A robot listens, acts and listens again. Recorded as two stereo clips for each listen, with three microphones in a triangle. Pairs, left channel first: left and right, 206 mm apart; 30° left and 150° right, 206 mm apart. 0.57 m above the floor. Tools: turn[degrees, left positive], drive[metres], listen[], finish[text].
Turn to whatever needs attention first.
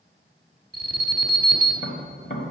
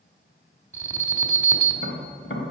Thought: The alarm: 50° right.
Action: turn[-50]
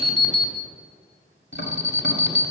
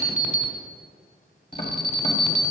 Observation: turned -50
Thought: The alarm is now 15° right.
Action: turn[-15]
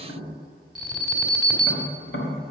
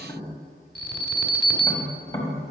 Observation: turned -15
Action: finish[Found it: an alarm, straight ahead, 1 to 2 m away.]